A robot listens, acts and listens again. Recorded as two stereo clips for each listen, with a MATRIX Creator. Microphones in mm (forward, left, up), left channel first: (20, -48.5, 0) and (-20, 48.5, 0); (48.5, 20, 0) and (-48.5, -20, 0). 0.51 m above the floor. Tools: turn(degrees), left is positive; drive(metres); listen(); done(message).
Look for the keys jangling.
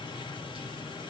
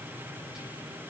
listen()
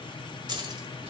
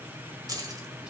turn(degrees=150)
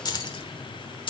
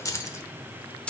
turn(degrees=-55)
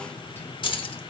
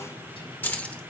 turn(degrees=-50)
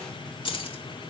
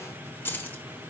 turn(degrees=-45)
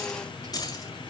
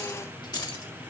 turn(degrees=-20)
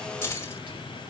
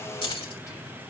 done("Facing the keys jangling, 1 to 2 m away.")